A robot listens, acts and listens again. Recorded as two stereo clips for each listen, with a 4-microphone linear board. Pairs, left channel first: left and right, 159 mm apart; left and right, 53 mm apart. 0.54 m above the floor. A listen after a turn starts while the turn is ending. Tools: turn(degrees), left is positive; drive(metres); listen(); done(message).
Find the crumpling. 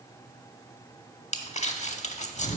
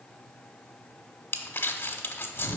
turn(degrees=50)
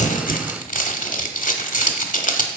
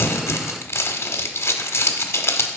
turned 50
turn(degrees=70)
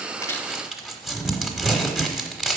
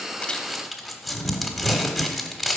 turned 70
done("Facing the crumpling, under 1 m away.")